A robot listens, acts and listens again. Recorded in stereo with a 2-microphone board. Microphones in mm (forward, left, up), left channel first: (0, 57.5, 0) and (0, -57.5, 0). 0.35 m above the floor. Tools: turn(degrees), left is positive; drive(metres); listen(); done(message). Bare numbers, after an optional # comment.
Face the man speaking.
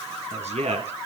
# The man speaking: about 75° right or 105° right.
turn(-75)
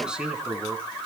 done("Found it: a man speaking, straight ahead.")